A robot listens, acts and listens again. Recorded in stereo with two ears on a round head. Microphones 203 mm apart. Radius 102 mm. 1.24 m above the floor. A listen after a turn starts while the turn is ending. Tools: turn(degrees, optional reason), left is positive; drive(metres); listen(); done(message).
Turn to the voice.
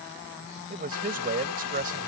turn(degrees=-40, reason="The man speaking: about 40° right or 140° right.")
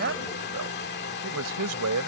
turn(degrees=-100, reason="So it is at 100° right.")
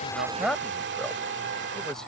done("Found it: a man speaking, straight ahead.")